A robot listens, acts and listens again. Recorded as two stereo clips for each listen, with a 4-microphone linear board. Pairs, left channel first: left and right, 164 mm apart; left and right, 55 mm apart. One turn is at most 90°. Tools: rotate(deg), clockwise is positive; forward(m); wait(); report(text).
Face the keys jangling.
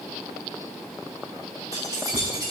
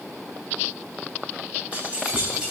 rotate(25)
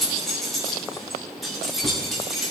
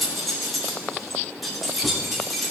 report("Facing the keys jangling, 2 to 4 m away.")